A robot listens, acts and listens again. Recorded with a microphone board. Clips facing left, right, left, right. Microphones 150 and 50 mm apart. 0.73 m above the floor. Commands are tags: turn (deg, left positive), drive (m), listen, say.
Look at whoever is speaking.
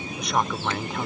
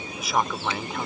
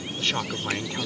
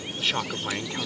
<turn deg="30"/>
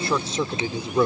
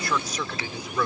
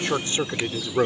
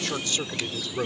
<turn deg="150"/>
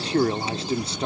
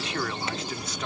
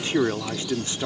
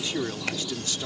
<turn deg="30"/>
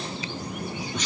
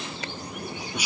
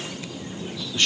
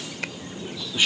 <turn deg="-10"/>
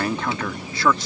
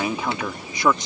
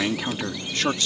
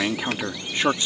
<turn deg="-20"/>
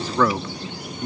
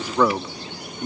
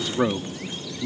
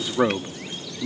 <turn deg="-15"/>
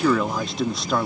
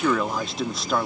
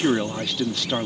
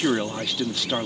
<say>Found it: a man speaking, straight ahead.</say>